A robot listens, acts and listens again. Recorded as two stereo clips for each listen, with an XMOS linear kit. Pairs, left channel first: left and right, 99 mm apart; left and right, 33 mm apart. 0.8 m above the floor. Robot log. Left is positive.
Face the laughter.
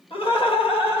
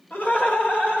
note: The laughter: about 65° left or 115° left.
cmd yaw +65
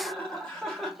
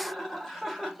end: Found it: laughter, straight ahead, 1 to 2 m away.